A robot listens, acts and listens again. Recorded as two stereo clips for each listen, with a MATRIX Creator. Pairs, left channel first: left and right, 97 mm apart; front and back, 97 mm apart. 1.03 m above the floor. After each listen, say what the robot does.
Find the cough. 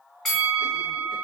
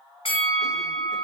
Keep listening.
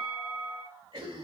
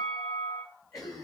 Turn 50° right.
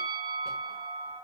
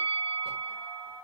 Keep listening.
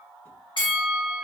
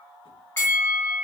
Keep listening.
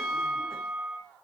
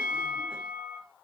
Facing where the cough came from. I can't hear it now.